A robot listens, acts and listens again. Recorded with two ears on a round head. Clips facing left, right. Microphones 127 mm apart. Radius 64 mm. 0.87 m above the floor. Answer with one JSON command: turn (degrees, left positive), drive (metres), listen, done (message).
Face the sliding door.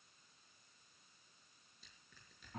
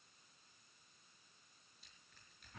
{"listen": true}
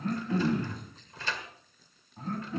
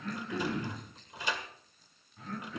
{"turn": -30}
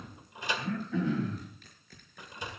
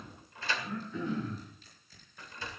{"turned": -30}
{"turn": 15}
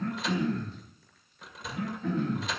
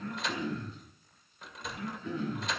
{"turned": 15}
{"done": "Facing the sliding door, 1 to 2 m away."}